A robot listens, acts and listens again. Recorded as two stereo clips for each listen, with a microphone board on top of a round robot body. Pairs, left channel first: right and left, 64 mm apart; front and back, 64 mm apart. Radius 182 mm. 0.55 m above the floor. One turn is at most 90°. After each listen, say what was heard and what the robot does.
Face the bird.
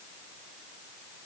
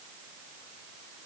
Keep listening.
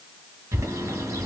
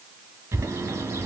The bird: 130° left. Turn 90° left.
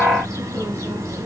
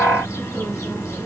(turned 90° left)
The bird is now 50° left. Turn 50° left.
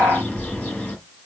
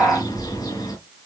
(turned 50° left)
The bird is now 20° right. Turn 20° right.
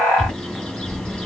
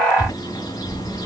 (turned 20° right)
The bird is now 10° right. Turn 10° right.
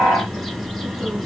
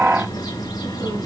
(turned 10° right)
Found it: a bird, straight ahead, over 4 m away.